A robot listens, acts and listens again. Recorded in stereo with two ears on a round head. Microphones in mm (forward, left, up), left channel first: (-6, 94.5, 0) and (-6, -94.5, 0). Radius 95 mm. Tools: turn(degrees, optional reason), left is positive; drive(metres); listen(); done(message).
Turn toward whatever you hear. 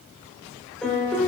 turn(degrees=30)
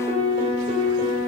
turn(degrees=-25, reason="So it is at 25° right.")
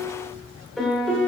done("Facing the piano.")